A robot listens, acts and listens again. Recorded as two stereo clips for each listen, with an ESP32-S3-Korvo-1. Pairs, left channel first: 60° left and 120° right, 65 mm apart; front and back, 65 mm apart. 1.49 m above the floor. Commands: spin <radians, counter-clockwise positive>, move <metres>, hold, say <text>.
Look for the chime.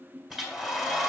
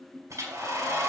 hold
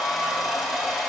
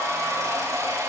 hold
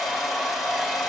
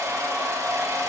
say I can't make out a chime, only a hair dryer.